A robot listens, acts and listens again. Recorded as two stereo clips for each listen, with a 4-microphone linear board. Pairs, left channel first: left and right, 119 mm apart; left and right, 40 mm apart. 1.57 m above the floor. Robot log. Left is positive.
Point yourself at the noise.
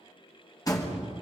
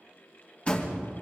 note: The door slam: about 30° left or 150° left.
cmd yaw +30
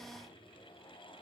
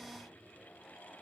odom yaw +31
cmd idle
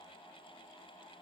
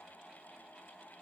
end: I heard a door slam, but can't make it out now. It was about straight ahead or 120° left.